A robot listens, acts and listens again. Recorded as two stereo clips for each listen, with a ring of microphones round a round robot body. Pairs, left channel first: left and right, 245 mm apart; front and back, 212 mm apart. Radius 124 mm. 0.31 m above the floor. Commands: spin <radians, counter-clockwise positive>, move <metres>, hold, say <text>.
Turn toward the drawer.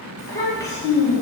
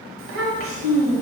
hold
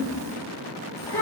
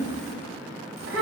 hold
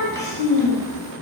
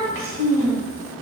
say I can't make out a drawer to turn to.